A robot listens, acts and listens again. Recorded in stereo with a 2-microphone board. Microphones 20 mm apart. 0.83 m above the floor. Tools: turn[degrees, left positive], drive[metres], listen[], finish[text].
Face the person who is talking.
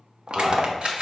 Action: turn[-30]
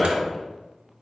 Thought: So it is at 15° left.
Action: turn[15]
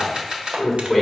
Action: finish[Found it: a man speaking, straight ahead.]